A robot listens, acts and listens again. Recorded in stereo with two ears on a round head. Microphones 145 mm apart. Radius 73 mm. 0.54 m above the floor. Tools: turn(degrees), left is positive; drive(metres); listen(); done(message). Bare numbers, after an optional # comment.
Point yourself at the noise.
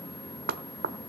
# The knocking: about 65° right or 115° right.
turn(-65)
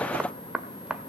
done("Facing the knocking.")